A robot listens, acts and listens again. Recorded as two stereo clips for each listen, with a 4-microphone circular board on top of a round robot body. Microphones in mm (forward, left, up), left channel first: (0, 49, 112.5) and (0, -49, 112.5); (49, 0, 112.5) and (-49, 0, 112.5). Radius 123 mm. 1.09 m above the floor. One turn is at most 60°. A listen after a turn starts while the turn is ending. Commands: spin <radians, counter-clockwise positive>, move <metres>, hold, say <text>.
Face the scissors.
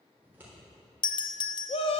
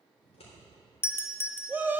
spin -0.26
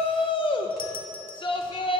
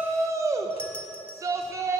hold
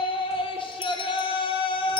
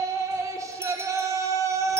hold
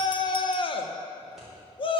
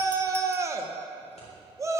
say I heard scissors from this way, but can't make it out now.